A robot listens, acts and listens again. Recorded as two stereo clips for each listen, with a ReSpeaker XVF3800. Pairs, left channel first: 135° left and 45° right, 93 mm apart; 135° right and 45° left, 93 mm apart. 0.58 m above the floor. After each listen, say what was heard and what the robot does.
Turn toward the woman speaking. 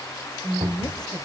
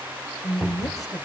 The woman speaking: 175° left. Turn 175° left.
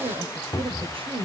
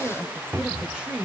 The woman speaking is now 35° right. Turn 35° right.
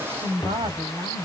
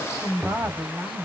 The woman speaking is now 20° right. Turn 20° right.
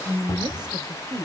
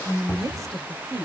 The woman speaking is now 10° right. Turn 10° right.
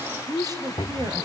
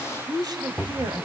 Found it: a woman speaking, straight ahead, 2 to 4 m away.